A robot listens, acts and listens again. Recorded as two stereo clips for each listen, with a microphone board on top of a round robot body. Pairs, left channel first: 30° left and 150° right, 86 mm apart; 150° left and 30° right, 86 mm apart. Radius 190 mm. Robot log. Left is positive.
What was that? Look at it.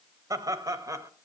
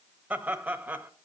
note: The laughter: 100° right.
cmd yaw -100
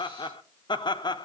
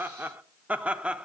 note: The laughter is now 45° left.
cmd yaw +45
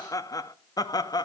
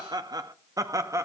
note: The laughter is now 15° left.
cmd yaw +15
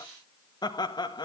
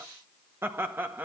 note: The laughter is now 35° left.
cmd yaw +35
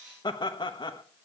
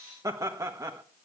note: The laughter is now 20° left.
cmd yaw +20
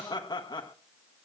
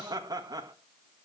end: Facing the laughter, 1 to 2 m away.